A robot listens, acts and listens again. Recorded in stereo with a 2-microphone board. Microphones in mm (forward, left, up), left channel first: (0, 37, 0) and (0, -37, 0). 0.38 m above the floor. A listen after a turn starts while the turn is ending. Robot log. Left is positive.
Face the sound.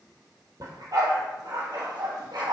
note: The dog barking: about 75° right or 105° right.
cmd yaw -75
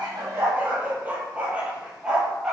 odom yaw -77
end: Found it: a dog barking, straight ahead.